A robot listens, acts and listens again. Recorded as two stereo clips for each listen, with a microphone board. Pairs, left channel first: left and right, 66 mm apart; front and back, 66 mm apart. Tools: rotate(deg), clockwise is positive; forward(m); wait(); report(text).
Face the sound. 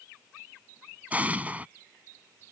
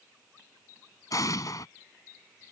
rotate(25)
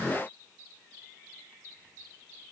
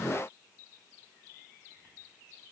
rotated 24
report("I heard an explosion from this way, but can't make it out now.")